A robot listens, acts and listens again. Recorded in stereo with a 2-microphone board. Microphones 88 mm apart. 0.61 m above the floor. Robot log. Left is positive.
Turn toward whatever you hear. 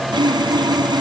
note: The sawing: about 55° right or 125° right.
cmd yaw -55
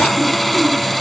end: Found it: sawing, straight ahead.